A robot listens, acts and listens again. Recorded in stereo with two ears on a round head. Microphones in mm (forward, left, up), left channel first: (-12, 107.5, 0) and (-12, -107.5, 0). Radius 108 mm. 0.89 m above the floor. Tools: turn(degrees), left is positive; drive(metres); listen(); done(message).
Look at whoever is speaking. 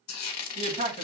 turn(degrees=-25)
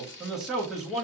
done("Facing the man speaking, 1 to 2 m away.")